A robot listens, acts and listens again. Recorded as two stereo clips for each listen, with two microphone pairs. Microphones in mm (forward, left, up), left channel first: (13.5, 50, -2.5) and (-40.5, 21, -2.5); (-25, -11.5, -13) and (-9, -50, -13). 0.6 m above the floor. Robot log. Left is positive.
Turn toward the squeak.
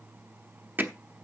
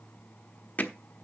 cmd idle
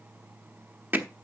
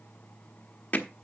cmd idle
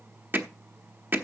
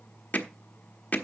end: I can't make out a squeak to turn to.